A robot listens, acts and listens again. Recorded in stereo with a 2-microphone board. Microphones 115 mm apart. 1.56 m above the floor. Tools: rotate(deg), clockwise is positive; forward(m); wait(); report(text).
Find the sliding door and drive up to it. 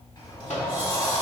rotate(-45)
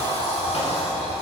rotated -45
rotate(-90)
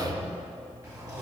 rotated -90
rotate(30)
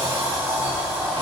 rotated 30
rotate(15)
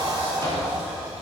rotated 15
rotate(10)
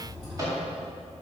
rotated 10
forward(1.0)
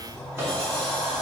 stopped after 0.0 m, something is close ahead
rotate(-10)
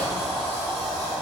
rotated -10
report("Blocked. The sliding door is further on, straight ahead.")